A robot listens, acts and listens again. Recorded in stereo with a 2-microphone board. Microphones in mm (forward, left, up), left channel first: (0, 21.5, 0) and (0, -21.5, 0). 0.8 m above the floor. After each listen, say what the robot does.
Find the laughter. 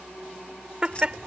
Turn 25° right.
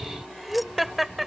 Facing the laughter.